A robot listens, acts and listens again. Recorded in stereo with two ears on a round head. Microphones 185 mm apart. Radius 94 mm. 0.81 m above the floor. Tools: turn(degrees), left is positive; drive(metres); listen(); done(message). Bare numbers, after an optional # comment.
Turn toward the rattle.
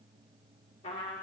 listen()
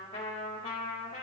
listen()
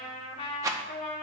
# The rattle: about 15° right or 165° right.
turn(-15)
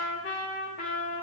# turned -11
listen()
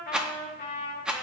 done("Facing the rattle, under 1 m away.")